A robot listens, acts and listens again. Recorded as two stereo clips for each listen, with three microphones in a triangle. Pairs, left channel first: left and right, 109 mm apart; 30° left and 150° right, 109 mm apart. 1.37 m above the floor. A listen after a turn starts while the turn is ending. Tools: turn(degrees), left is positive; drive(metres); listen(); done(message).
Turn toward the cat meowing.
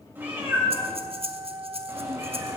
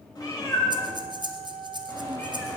turn(degrees=-30)
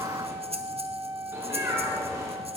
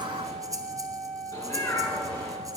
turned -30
turn(degrees=-25)
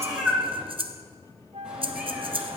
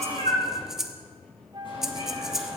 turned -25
done("Facing the cat meowing, over 4 m away.")